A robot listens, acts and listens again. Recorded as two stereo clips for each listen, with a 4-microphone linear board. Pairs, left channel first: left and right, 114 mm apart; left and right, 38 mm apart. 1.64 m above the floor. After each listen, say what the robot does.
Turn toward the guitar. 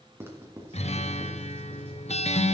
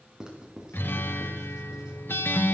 Turn 70° left.
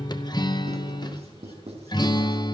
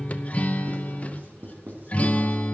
Turn 40° left.
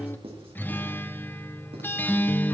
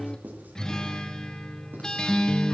Turn 15° left.
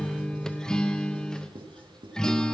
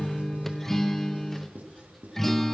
Facing the guitar.